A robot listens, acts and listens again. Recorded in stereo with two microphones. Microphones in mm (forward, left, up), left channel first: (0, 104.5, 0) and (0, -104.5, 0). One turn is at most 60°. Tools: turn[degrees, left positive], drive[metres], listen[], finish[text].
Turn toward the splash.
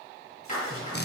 Action: turn[60]
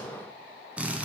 Thought: Nothing new. It was at 30° left.
Action: turn[30]
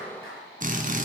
Action: finish[Facing where the splash came from. I can't hear it now.]